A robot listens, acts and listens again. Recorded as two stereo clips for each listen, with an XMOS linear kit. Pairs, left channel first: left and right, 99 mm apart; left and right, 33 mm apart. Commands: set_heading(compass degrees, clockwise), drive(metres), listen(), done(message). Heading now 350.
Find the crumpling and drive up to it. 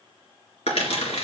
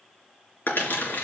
set_heading(260)
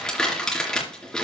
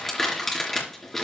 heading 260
drive(1.0)
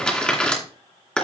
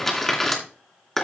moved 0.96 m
set_heading(250)
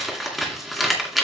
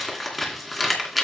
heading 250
drive(1.0)
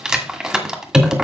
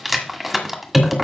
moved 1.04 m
drive(1.0)
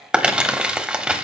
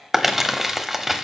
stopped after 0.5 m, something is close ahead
set_heading(260)
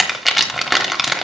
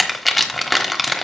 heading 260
done("I am next to the crumpling.")